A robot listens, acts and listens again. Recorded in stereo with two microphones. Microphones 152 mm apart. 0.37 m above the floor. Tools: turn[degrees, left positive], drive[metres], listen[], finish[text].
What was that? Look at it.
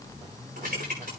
Action: turn[-90]
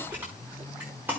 Thought: So it is at 15° right.
Action: turn[-15]
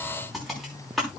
Action: finish[Found it: typing on a keyboard, straight ahead, over 4 m away.]